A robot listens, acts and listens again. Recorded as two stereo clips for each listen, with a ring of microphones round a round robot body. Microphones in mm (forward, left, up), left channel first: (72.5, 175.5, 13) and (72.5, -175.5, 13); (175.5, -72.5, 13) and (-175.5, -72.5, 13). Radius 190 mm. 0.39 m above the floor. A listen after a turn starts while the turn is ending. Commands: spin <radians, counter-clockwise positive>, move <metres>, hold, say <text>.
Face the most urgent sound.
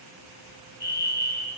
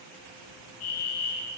spin 0.52
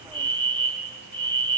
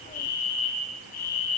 spin 0.44
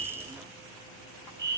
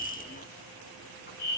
say Found it: a fire alarm, straight ahead, over 4 m away.